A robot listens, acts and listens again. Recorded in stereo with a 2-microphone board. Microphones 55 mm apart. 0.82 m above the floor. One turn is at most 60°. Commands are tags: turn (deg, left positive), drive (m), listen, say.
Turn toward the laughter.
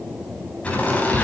<turn deg="25"/>
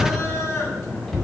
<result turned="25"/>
<turn deg="60"/>
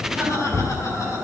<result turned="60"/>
<turn deg="60"/>
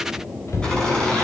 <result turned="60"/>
<turn deg="15"/>
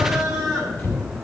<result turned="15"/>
<say>Facing the laughter.</say>